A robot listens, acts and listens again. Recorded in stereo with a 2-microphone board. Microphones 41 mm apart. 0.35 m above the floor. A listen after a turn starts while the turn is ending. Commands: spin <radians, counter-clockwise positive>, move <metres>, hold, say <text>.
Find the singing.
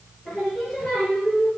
spin 0.26
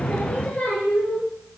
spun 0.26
spin 0.70
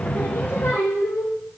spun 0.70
spin 1.83
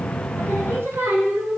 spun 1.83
spin -1.40
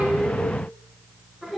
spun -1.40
say Found it: singing, straight ahead.